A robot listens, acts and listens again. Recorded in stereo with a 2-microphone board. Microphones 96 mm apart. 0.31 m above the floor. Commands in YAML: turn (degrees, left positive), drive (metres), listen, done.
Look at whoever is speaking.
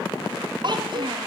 turn: -50
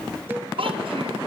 turn: -75
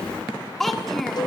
done: "Found it: a child speaking, straight ahead, 2 to 4 m away."